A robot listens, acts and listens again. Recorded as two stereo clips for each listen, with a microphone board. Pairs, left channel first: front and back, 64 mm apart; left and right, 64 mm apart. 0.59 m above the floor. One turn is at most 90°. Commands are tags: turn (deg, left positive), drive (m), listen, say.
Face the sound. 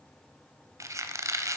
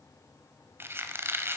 <turn deg="-90"/>
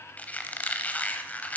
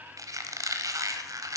<turn deg="-65"/>
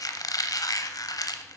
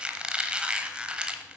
<turn deg="-15"/>
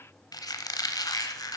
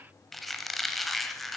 <say>Found it: a squeak, straight ahead.</say>